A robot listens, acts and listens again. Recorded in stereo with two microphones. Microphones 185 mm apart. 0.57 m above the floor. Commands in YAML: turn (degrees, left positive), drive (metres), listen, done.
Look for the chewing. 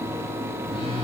listen: true
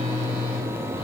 listen: true
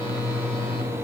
done: "I can't make out chewing to turn to."